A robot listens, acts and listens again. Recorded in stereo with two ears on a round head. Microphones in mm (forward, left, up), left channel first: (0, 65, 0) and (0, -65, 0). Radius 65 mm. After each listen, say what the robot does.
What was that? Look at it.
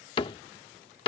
Turn 35° left.
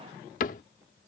Turn 105° left.
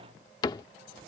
Turn 35° left.
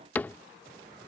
Turn 15° left.
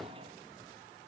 Facing the cupboard door.